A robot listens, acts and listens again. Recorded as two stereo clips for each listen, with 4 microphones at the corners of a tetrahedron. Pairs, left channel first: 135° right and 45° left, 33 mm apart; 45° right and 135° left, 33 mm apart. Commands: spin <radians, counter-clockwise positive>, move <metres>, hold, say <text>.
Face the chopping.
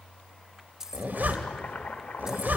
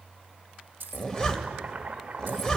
spin -2.88
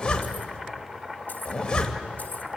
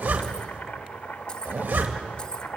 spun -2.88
spin -0.52
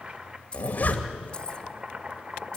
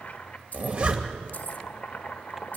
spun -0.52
say Facing the chopping, 1 to 2 m away.